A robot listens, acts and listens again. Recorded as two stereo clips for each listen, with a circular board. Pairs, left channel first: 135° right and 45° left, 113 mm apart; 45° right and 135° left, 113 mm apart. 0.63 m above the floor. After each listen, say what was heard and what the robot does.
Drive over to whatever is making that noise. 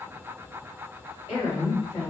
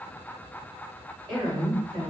The woman speaking: straight behind. Turn 180° left.
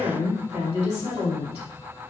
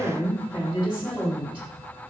The woman speaking is now 55° left. Turn 55° left.
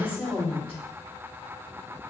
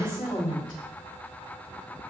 Drive 1.0 m forward.
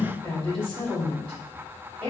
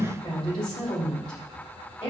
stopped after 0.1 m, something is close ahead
Blocked. The woman speaking is further on, straight ahead.